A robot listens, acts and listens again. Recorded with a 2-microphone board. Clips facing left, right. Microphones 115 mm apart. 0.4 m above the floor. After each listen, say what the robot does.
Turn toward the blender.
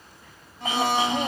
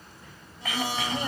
Turn 60° left.
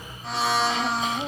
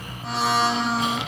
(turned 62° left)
Facing the blender.